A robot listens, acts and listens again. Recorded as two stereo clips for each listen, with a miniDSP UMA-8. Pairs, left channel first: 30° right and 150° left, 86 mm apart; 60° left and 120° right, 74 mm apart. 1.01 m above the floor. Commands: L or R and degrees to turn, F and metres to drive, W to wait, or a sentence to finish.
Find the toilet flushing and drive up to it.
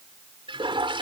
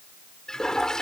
L140
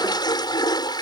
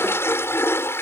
F1.0
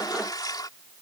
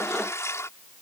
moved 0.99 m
L10
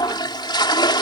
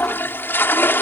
F1.0
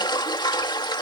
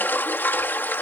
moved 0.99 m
F1.0
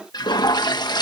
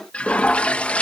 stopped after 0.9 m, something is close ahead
R10
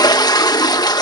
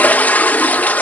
I am next to the toilet flushing.